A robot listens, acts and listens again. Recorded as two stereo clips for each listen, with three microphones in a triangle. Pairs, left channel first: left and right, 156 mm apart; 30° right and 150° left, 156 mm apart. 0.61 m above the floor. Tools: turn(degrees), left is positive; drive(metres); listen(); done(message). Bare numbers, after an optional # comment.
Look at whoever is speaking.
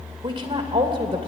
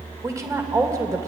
# The woman speaking: 140° right.
turn(-140)
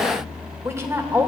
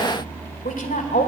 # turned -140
# The woman speaking is now 20° right.
turn(-20)
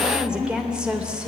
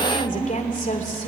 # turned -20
done("Facing the woman speaking.")